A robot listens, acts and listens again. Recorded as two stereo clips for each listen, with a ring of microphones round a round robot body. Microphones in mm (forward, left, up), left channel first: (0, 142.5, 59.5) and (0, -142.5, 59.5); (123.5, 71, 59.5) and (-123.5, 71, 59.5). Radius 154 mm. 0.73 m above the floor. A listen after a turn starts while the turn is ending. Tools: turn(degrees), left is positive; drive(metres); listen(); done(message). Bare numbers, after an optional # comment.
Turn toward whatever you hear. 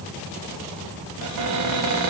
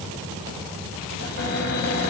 # The cupboard door: 55° right.
turn(-55)
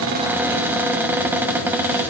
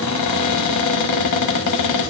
done("Found it: a cupboard door, straight ahead, 1 to 2 m away.")